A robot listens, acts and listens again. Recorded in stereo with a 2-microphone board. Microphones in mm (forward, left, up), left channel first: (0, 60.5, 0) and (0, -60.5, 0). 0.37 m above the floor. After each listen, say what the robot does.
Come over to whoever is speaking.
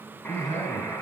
Turn 70° left.
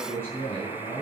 Turn 20° left.
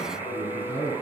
Turn 10° left.
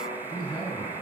Drive 1.0 m forward.
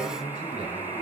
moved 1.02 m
Drive 1.0 m forward.
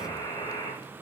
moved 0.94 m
Keep listening.
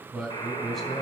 Drive 1.0 m forward.
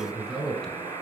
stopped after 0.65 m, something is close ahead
Arrived at the man speaking, straight ahead.